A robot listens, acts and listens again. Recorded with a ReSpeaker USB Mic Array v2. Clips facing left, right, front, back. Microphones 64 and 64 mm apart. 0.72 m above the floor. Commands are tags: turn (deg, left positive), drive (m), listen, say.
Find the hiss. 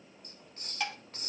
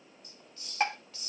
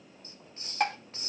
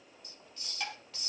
<turn deg="55"/>
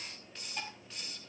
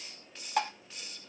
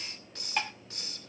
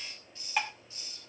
<say>Found it: a hiss, straight ahead.</say>